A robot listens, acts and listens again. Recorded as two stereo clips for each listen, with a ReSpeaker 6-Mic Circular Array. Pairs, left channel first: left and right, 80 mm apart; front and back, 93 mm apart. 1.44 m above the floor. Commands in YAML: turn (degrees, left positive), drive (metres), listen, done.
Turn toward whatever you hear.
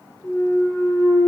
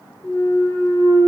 turn: 65
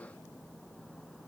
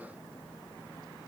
done: "I heard a clunk from this way, but can't make it out now."